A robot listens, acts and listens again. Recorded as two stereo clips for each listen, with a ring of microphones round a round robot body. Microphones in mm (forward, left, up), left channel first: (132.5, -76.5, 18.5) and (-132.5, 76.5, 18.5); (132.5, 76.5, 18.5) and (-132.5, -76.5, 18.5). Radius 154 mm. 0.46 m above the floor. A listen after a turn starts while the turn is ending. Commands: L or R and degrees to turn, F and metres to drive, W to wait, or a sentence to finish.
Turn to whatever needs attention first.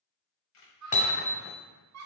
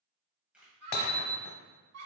L180
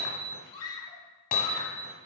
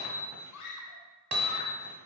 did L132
L45
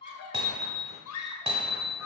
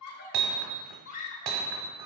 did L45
Found it: a scream, straight ahead, 1 to 2 m away.